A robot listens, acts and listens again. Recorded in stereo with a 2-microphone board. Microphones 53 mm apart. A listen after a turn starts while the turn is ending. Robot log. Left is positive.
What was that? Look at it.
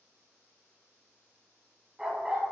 note: The dog barking: about 20° right or 160° right.
cmd yaw -20
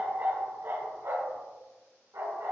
note: So it is at 105° right.
cmd yaw -105
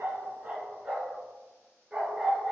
note: The dog barking is now 15° right.
cmd yaw -15
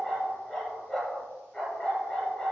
end: Found it: a dog barking, straight ahead.